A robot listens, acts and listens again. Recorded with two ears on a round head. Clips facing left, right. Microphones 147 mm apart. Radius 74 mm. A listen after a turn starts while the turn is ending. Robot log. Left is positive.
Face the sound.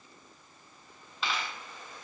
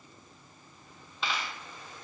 cmd yaw +30
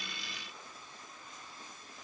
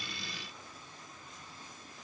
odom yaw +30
cmd idle
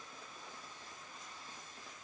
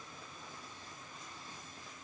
end: I heard a dropped coin, but can't make it out now. It was about 30° right or 150° left.